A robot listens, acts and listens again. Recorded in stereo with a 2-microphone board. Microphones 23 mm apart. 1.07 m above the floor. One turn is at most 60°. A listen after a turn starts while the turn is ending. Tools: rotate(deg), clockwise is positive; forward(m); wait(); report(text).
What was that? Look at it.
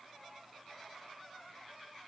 wait()
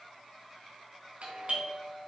rotate(60)
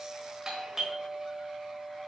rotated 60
rotate(25)
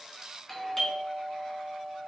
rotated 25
rotate(-10)
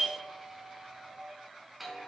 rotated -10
report("Found it: a doorbell, straight ahead.")